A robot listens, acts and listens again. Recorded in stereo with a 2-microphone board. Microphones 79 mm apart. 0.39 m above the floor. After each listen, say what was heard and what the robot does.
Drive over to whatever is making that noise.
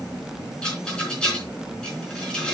Turn 30° left.
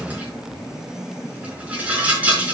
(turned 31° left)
So it is at 20° right. Turn 20° right.
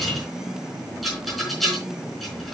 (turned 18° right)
Drive 1.0 m forward.
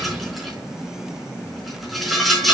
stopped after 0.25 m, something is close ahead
Something is in my way. I am facing the rattle but have not reached it.